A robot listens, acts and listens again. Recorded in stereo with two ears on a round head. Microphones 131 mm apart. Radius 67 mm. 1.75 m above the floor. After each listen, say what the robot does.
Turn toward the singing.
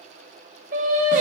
Turn 55° right.
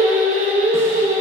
Turn 60° right.
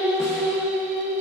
Turn 15° right.
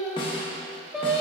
Facing the singing, 1 to 2 m away.